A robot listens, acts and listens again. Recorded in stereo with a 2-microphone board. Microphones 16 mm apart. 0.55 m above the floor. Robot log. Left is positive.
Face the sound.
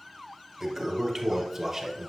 cmd yaw -30
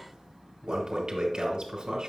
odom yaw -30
note: So it is at 135° right.
cmd yaw -135
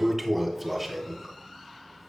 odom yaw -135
note: The toilet flushing is now 15° right.
cmd yaw -15
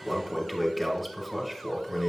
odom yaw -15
note: The toilet flushing is now 10° right.
cmd yaw -10
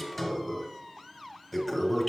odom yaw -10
end: Found it: a toilet flushing, straight ahead, 2 to 4 m away.